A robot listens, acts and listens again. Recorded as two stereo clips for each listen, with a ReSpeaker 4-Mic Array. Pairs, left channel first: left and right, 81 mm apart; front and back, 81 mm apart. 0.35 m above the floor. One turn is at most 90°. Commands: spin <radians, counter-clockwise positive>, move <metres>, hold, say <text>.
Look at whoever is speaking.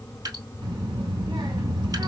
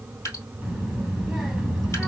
spin -1.57
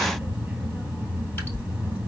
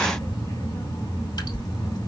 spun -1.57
spin -0.26
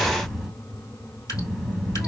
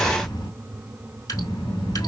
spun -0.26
say Facing the child speaking.